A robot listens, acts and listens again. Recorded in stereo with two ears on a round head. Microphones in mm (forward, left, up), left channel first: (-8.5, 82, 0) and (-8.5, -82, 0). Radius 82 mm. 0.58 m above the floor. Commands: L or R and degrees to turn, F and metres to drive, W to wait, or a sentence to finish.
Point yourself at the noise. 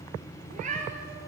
R40
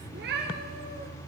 R125
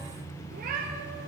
R50
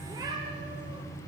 R20
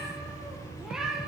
Facing the cat meowing, 2 to 4 m away.